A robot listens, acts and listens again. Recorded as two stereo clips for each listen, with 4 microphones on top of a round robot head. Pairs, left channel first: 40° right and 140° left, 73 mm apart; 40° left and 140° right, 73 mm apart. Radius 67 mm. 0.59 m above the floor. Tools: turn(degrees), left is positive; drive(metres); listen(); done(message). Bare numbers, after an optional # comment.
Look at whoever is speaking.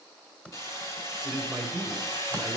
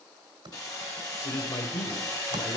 # The man speaking: 55° left.
turn(55)
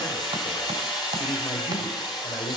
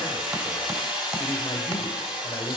# The man speaking is now 15° right.
turn(-15)
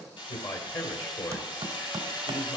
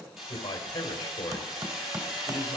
done("Facing the man speaking.")